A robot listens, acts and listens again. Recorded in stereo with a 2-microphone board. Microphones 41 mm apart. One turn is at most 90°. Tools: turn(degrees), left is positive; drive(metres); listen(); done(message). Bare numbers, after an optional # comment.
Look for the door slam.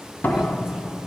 # The door slam: about 50° left or 130° left.
turn(50)
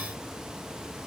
listen()
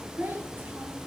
done("I heard a door slam, but can't make it out now. It was about straight ahead or 80° left.")